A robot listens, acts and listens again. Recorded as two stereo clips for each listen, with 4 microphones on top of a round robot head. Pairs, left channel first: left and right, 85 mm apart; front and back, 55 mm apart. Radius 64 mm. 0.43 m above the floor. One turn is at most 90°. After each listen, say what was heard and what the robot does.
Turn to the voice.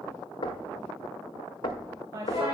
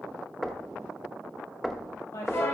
The woman speaking: 35° right. Turn 35° right.
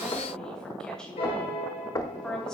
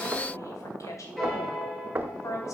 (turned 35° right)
The woman speaking is now 10° left. Turn 10° left.
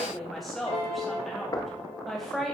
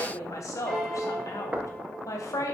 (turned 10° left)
Found it: a woman speaking, straight ahead.